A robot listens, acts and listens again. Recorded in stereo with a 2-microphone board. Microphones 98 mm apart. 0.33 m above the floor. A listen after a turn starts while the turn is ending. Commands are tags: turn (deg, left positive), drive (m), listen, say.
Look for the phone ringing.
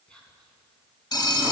<turn deg="45"/>
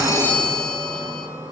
<turn deg="10"/>
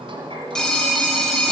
<say>Facing the phone ringing, 1 to 2 m away.</say>